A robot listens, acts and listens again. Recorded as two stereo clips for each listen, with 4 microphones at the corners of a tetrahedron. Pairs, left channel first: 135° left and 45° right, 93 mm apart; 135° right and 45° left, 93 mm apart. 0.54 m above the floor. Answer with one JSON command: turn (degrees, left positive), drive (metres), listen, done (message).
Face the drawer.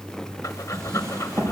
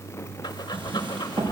{"turn": 15}
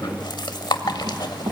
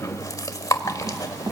{"done": "Facing the drawer."}